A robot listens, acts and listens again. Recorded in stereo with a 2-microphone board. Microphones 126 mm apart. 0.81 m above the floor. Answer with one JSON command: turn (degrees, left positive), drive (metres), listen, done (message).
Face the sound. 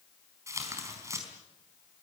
{"turn": -25}
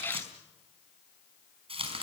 {"turn": -135}
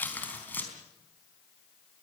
{"turn": 15}
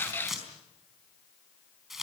{"done": "Facing the tearing paper, over 4 m away."}